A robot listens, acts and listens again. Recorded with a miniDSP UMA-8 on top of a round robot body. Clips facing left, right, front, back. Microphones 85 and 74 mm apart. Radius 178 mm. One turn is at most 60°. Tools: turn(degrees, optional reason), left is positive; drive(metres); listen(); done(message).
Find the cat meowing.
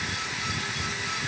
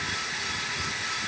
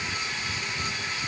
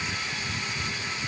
listen()
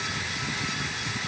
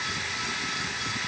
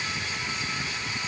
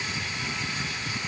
listen()
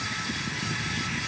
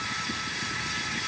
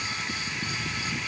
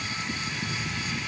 done("I can't make out a cat meowing to turn to.")